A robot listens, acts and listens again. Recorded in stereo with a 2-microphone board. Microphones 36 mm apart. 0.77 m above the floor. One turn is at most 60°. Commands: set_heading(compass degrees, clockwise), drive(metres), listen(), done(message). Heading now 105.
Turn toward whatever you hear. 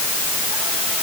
listen()
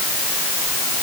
listen()
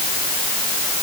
done("I can't make out anything to turn to.")